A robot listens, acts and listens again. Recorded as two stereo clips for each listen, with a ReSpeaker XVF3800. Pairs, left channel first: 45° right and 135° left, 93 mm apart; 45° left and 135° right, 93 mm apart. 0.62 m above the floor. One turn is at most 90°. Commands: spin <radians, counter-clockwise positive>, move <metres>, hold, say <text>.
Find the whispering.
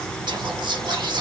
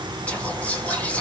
spin 1.57
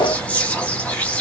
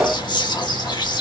spin 0.44
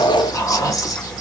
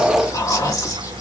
say Facing the whispering, 1 to 2 m away.